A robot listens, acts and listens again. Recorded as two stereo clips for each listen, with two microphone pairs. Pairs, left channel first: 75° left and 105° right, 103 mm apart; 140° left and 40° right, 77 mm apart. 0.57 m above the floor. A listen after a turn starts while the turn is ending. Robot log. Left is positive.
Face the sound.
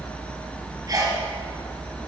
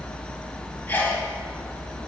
note: The sneeze: 155° right.
cmd yaw -155
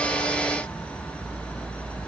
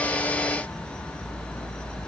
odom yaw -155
end: Facing where the sneeze came from. I can't hear it now.